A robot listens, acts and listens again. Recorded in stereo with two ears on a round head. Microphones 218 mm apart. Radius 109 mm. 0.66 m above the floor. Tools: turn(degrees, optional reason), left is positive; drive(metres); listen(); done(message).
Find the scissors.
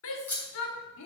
turn(degrees=30)
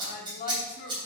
turn(degrees=-20, reason="So it is at 20° right.")
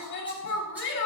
listen()
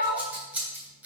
done("Found it: scissors, straight ahead, 2 to 4 m away.")